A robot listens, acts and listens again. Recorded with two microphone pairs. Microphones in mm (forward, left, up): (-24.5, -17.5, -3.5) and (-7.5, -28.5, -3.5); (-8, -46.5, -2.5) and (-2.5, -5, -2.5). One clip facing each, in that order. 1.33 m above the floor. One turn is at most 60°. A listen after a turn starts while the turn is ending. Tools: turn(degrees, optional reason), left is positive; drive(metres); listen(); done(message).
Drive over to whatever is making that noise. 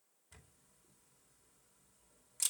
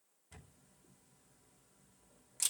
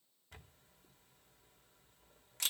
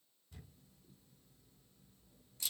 turn(degrees=-60, reason="The camera shutter: 120° right.")
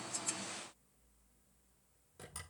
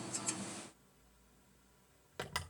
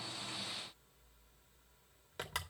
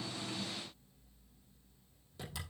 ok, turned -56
turn(degrees=-60, reason="The camera shutter is now 65° right.")
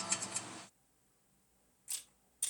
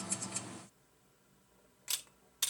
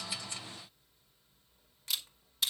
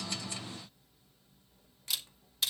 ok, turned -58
turn(degrees=-10, reason="The camera shutter is now 10° right.")
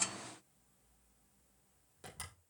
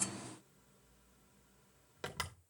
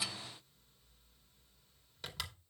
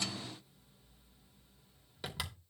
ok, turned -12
drive(metres=1.0)
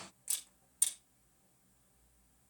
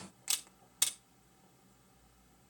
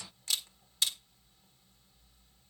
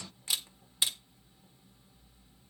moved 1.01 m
drive(metres=1.0)
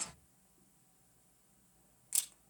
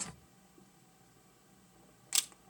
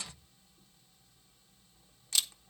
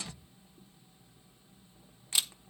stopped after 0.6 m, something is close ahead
turn(degrees=10, reason="The camera shutter is now 10° left.")
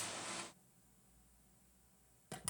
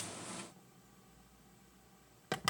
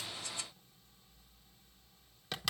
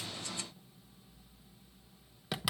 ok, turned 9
done("I am next to the camera shutter.")